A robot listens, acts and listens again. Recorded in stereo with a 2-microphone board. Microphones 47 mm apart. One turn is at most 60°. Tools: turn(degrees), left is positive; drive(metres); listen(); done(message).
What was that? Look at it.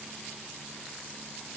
listen()
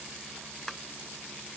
turn(degrees=30)
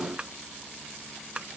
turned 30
turn(degrees=-25)
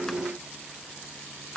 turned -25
turn(degrees=15)
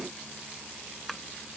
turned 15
done("Found it: tapping, straight ahead.")